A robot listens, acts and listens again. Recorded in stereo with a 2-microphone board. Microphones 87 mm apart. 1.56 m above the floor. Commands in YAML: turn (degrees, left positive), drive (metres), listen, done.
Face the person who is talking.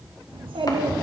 turn: -75
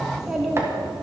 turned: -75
done: "Found it: a child speaking, straight ahead, 2 to 4 m away."